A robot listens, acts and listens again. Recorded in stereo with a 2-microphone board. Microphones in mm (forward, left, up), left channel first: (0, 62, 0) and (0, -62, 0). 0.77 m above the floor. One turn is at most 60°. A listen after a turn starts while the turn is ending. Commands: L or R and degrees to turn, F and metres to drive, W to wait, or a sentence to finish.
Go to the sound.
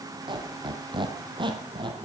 R40
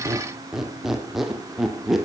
F1.0
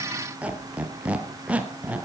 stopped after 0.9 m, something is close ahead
R15
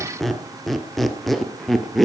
Arrived at the squeak, straight ahead.